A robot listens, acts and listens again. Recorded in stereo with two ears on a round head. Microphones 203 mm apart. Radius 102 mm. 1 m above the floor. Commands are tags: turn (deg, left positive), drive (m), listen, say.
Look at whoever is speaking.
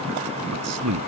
<turn deg="-90"/>
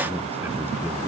<turn deg="-10"/>
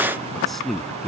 <say>Found it: a man speaking, straight ahead.</say>